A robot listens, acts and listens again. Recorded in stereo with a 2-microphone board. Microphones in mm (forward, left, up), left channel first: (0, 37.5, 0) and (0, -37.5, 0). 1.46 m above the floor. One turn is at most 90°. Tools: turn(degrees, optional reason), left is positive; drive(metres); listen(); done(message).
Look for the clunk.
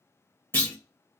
turn(degrees=25, reason="The clunk: about 25° left or 155° left.")
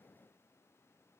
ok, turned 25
listen()
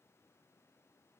done("I heard a clunk, but can't make it out now. It was about straight ahead or 130° left.")